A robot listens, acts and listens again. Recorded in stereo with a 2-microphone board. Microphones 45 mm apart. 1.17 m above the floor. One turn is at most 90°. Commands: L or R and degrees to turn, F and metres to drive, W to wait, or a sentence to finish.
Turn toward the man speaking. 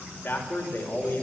L45
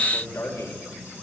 L85
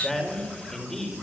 L10
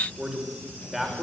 Found it: a man speaking, straight ahead.